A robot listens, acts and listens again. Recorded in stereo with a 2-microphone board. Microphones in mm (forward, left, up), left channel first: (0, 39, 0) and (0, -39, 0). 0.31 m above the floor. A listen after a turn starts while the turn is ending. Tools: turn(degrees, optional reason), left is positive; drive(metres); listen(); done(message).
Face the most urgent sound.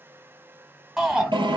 turn(degrees=-30)
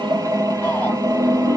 listen()
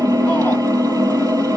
listen()
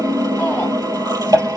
done("I heard a shout, but can't make it out now. It was about 25° left or 145° right.")